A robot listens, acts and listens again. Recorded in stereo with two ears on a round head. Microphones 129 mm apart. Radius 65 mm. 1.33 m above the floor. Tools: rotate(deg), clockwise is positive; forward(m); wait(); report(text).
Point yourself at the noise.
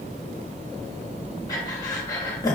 rotate(-25)
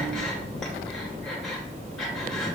wait()
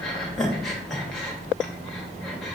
report("Found it: breathing, straight ahead, 1 to 2 m away.")